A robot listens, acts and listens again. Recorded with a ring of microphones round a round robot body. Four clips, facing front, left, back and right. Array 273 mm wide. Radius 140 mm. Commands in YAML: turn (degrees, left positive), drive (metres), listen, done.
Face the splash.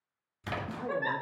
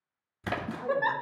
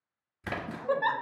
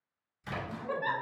turn: 110
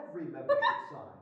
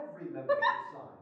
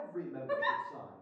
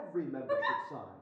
done: "I heard a splash from this way, but can't make it out now."